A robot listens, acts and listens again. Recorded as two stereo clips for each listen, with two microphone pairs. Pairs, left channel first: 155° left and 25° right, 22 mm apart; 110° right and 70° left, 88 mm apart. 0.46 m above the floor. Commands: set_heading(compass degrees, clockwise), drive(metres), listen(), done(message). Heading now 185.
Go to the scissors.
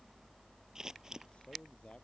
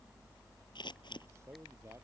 set_heading(265)
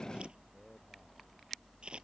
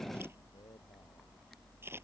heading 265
set_heading(255)
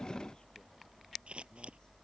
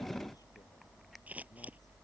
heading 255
drive(1.0)
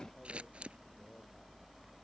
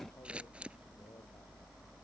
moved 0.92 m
drive(1.0)
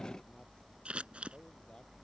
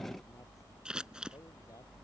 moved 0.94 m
set_heading(265)
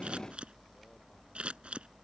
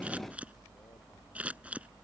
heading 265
drive(1.0)
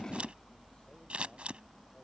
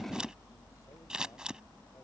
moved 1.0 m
set_heading(275)
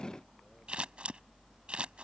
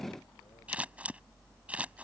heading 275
drive(1.0)
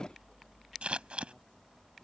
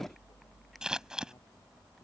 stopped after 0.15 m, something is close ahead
set_heading(285)
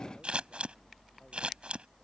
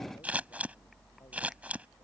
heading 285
done("I am next to the scissors.")